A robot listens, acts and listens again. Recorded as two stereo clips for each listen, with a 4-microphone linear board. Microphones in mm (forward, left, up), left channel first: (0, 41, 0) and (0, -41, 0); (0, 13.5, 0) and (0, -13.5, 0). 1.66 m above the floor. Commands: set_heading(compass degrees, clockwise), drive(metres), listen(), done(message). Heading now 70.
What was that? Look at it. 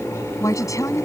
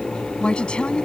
set_heading(30)
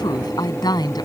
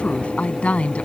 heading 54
set_heading(359)
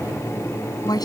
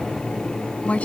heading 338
set_heading(288)
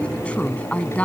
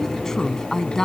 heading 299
set_heading(284)
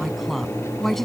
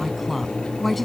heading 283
done("Facing the woman speaking.")